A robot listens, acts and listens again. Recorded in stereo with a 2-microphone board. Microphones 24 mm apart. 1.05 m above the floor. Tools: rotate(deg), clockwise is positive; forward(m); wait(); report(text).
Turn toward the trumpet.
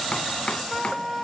rotate(-30)
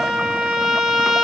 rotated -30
rotate(30)
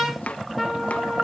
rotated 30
rotate(10)
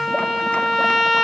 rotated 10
report("Facing the trumpet, 2 to 4 m away.")